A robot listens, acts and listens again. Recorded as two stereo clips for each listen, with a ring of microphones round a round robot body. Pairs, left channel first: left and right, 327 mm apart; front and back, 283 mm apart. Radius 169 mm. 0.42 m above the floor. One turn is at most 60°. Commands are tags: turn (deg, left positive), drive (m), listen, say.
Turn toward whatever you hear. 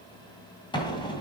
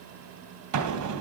<turn deg="60"/>
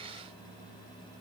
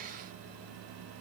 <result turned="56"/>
<turn deg="60"/>
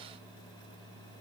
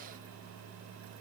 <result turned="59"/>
<turn deg="50"/>
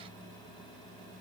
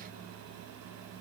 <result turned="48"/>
<say>Facing where the explosion came from. I can't hear it now.</say>